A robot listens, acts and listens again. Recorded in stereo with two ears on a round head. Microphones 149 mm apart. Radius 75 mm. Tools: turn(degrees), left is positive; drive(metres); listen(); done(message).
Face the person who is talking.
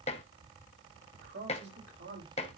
turn(degrees=-70)
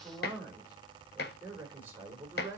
turn(degrees=-15)
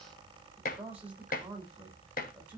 turn(degrees=-10)
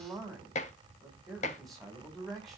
done("Found it: a man speaking, straight ahead.")